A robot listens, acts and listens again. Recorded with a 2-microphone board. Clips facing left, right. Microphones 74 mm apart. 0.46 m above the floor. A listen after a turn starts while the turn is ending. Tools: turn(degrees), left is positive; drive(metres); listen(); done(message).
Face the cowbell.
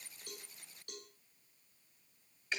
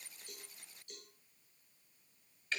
turn(degrees=65)
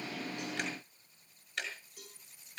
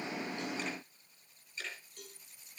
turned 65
done("Facing the cowbell.")